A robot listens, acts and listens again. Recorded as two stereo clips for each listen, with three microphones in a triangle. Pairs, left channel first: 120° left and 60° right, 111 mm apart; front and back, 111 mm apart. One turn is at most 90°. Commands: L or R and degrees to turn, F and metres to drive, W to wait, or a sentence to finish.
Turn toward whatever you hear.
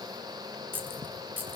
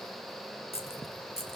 L15
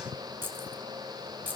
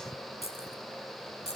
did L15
L15
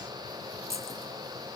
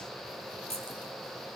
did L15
Facing the keys jangling.